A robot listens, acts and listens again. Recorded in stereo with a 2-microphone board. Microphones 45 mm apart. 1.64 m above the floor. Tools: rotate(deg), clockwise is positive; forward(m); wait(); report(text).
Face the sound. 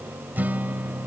rotate(40)
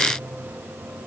wait()
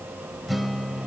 report("Facing the guitar.")